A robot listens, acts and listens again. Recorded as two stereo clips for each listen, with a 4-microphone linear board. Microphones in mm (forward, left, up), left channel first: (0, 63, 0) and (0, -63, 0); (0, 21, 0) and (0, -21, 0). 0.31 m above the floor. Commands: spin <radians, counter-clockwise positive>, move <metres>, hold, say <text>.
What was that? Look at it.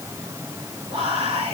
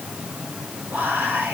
spin -1.05
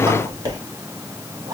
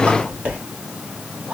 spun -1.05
spin -0.70
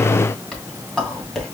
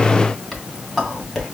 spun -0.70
say Facing the whispering, 2 to 4 m away.